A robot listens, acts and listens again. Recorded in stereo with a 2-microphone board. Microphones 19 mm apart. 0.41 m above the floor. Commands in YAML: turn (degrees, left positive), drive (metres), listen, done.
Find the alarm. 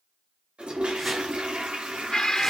turn: 50
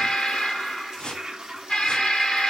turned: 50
turn: 80
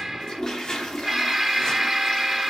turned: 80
done: "Found it: an alarm, straight ahead, 2 to 4 m away."